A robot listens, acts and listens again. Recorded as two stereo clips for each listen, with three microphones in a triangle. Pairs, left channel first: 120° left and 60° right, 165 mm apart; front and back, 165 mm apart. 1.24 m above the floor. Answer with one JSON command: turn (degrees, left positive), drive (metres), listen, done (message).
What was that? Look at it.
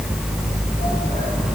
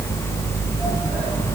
{"listen": true}
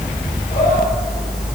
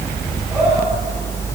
{"listen": true}
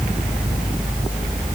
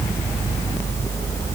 {"done": "I can't make out anything to turn to."}